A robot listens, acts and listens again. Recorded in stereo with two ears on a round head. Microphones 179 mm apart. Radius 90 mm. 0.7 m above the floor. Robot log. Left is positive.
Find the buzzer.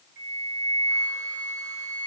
cmd idle
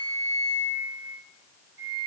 cmd idle
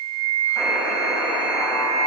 note: The buzzer: about 15° right or 165° right.
cmd yaw -15
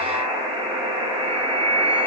note: So it is at 155° right.
cmd yaw -155
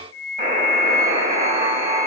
note: The buzzer is now 20° right.
cmd yaw -20
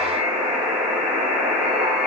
end: Facing the buzzer.